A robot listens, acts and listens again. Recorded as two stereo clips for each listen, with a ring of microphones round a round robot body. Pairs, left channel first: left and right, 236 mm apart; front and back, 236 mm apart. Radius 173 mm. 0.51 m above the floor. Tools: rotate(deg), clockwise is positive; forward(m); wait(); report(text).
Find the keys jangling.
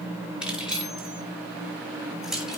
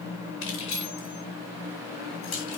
report("Found it: keys jangling, straight ahead, over 4 m away.")